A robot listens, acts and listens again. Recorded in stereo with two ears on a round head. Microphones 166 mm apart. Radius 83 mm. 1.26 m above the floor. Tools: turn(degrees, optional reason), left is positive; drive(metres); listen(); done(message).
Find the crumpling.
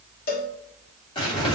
turn(degrees=25, reason="The crumpling: about 25° left or 155° left.")
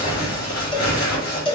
turn(degrees=130, reason="So it is at 130° left.")
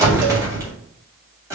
turn(degrees=-15, reason="The crumpling is now 15° right.")
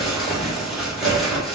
done("Found it: crumpling, straight ahead, 1 to 2 m away.")